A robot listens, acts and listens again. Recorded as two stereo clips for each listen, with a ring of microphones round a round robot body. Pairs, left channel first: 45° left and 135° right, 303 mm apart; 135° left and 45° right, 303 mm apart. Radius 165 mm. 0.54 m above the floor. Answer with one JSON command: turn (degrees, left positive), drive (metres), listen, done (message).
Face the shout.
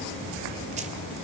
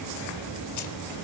{"listen": true}
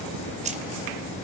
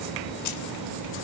{"listen": true}
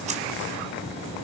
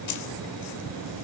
{"done": "I can't make out a shout."}